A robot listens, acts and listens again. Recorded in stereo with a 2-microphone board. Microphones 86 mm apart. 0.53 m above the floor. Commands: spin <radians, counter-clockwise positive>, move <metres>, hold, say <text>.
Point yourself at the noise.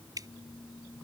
spin -0.79
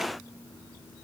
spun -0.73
hold
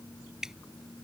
say Found it: dripping, straight ahead.